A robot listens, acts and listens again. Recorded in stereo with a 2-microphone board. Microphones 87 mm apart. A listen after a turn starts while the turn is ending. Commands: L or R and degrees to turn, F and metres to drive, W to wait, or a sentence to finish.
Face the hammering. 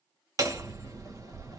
R40
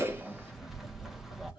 Facing the hammering, under 1 m away.